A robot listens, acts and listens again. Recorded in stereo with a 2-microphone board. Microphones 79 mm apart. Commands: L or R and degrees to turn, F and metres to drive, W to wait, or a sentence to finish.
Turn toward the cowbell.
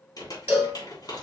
R25
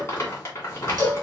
R130
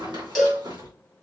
Facing the cowbell.